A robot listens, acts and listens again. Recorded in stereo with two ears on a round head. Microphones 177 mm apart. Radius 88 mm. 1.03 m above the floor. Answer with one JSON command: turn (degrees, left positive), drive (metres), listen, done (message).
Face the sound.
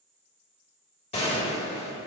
{"turn": 30}
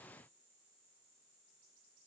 {"listen": true}
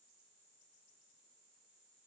{"done": "I heard a gunshot, but can't make it out now. It was about straight ahead or 120° left."}